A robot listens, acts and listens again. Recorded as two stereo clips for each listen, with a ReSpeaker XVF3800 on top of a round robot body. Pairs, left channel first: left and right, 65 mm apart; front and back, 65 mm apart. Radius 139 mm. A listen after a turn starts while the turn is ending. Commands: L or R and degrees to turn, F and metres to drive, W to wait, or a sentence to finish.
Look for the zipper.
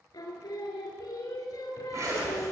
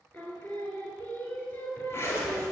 R50
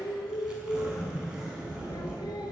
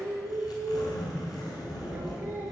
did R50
R15
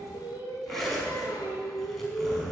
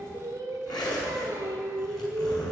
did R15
Found it: a zipper, straight ahead, over 4 m away.